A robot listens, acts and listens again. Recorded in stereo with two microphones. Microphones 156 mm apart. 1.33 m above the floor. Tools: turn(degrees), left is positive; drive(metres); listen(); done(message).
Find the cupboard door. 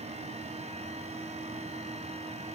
listen()
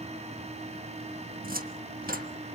turn(degrees=-75)
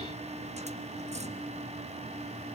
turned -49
turn(degrees=-50)
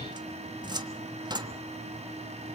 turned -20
turn(degrees=-30)
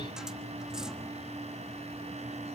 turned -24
listen()
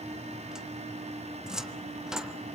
done("Facing the cupboard door, 1 to 2 m away.")